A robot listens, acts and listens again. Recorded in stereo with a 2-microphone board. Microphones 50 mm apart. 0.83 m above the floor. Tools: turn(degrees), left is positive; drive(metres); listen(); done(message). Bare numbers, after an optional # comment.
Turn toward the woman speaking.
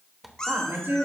# The woman speaking: about 60° right or 120° right.
turn(-60)
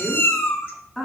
# So it is at 10° left.
turn(10)
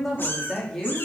# The woman speaking is now 15° left.
turn(15)
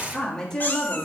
# The woman speaking is now 25° left.
turn(25)
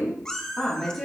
# The woman speaking is now 10° left.
turn(10)
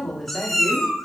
done("Found it: a woman speaking, straight ahead, 2 to 4 m away.")